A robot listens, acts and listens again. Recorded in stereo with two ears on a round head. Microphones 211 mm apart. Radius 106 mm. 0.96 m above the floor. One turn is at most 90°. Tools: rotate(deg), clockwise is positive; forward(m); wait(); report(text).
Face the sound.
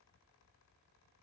wait()
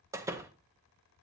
rotate(30)
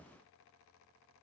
wait()
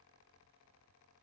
report("I heard a door slam, but can't make it out now. It was about 20° left or 140° right.")